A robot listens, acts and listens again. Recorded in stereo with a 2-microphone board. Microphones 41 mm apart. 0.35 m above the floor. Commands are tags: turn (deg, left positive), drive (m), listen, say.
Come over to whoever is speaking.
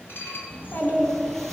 <turn deg="55"/>
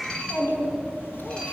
<turn deg="70"/>
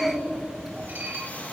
<turn deg="-10"/>
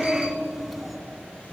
<drive m="1.0"/>
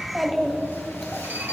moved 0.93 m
<drive m="1.0"/>
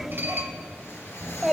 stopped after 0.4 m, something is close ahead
<say>I am next to the child speaking.</say>